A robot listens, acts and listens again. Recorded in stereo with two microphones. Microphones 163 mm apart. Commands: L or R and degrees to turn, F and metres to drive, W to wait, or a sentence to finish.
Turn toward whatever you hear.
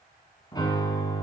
L25
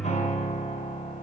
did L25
L125
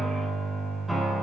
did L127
Facing the piano.